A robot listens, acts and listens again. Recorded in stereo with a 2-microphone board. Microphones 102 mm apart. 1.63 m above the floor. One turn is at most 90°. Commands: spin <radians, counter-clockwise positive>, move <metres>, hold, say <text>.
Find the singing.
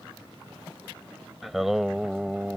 spin -0.52
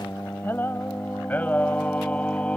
spin 0.17
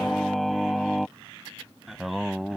say Found it: singing, straight ahead.